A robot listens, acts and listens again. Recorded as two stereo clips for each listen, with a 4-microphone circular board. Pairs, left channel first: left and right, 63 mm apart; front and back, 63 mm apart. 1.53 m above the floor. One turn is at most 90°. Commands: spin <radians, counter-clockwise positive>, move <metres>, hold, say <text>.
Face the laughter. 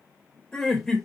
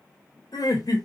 say Found it: laughter, straight ahead.